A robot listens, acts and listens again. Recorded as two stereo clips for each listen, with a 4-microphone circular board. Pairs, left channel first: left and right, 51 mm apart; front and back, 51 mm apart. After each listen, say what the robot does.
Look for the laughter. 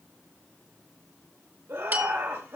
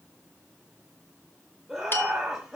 Turn 105° right.
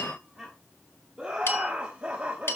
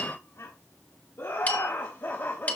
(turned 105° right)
Turn 35° right.
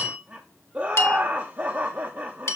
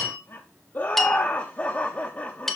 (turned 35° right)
Turn 50° right.
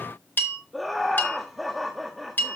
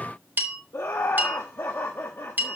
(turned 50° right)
Facing the laughter, 1 to 2 m away.